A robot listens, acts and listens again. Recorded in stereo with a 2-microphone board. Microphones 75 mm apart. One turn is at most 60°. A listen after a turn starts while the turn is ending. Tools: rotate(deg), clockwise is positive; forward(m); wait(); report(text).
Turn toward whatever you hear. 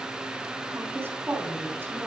rotate(30)
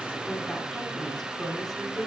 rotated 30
report("Found it: a woman speaking, straight ahead.")